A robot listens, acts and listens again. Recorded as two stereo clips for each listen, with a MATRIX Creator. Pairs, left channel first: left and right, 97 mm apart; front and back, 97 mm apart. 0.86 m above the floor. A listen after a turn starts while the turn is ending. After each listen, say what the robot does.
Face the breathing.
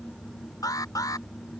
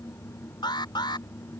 Keep listening.
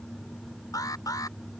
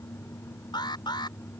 Keep listening.
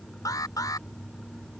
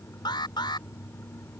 I can't make out breathing, only an alarm.